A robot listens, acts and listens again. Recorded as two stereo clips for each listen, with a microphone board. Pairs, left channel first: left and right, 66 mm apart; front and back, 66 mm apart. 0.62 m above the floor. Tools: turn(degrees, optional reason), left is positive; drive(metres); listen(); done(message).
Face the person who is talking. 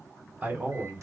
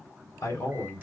turn(degrees=-30, reason="The man speaking: 30° right.")
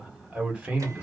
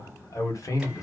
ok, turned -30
turn(degrees=-20, reason="The man speaking is now 20° right.")
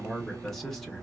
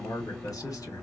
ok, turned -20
done("Found it: a man speaking, straight ahead.")